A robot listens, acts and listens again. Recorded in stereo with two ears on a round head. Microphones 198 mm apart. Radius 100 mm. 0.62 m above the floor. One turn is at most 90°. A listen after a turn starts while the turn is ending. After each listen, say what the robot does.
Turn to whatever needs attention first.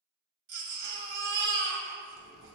Turn 55° right.
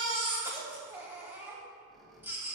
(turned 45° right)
Turn 10° right.
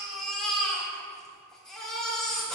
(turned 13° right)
Facing the baby crying, 2 to 4 m away.